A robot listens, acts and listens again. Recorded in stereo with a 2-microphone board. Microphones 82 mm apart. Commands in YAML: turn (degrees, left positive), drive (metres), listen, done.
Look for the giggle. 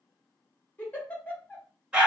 turn: 20
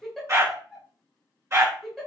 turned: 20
done: "Found it: a giggle, straight ahead."